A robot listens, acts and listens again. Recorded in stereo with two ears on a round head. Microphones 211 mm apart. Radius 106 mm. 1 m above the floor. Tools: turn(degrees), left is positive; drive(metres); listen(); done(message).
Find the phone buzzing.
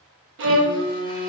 turn(degrees=20)
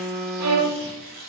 done("Found it: a phone buzzing, straight ahead.")